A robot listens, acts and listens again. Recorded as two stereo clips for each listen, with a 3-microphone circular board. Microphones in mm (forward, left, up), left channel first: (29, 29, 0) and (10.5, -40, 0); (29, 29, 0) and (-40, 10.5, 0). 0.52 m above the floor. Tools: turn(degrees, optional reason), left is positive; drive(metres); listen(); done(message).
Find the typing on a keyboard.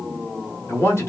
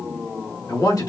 listen()
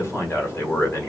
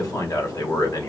listen()
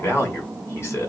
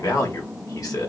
done("I can't make out typing on a keyboard to turn to.")